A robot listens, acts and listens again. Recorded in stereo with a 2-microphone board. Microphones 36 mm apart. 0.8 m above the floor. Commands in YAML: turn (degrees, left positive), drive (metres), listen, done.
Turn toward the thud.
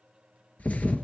turn: 50
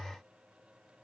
listen: true
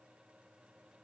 done: "I heard a thud, but can't make it out now. It was about straight ahead or 80° left."